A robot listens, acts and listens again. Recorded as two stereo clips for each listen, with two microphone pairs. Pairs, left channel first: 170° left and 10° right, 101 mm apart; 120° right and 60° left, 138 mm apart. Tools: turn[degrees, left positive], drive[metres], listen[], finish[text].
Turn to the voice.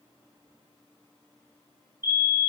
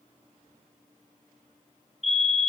Action: listen[]
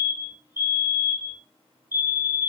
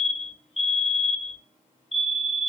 Action: listen[]
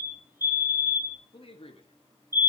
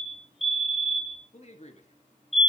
Thought: The man speaking: 160° right.
Action: turn[-160]
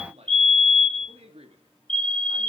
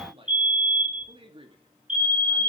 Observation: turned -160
Action: finish[Found it: a man speaking, straight ahead.]